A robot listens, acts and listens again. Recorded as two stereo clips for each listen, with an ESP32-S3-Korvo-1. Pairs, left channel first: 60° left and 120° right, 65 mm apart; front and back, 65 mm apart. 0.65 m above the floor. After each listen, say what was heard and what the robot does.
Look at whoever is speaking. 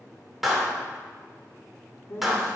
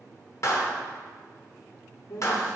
The man speaking: 20° left. Turn 20° left.
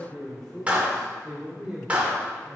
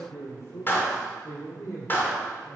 The man speaking is now 45° right. Turn 45° right.
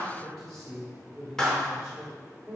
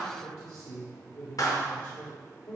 The man speaking is now 40° right. Turn 40° right.
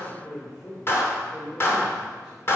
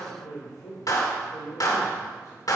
Facing the man speaking, 2 to 4 m away.